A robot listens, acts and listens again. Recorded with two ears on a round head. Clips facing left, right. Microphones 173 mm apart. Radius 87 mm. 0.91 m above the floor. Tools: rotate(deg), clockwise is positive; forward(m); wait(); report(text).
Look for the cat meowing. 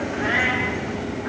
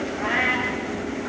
rotate(-30)
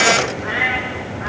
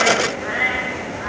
rotate(-140)
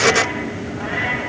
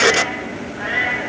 rotate(15)
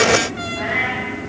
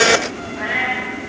report("Found it: a cat meowing, straight ahead, over 4 m away.")